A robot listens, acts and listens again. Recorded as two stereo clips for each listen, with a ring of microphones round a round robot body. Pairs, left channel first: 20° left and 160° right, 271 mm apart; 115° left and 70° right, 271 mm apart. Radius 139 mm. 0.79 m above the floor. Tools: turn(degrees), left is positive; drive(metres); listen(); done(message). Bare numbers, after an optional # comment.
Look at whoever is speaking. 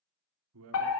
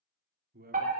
# The man speaking: 125° right.
turn(-125)
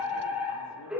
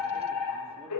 listen()
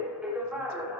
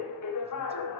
listen()
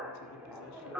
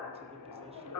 done("I heard a man speaking from this way, but can't make it out now.")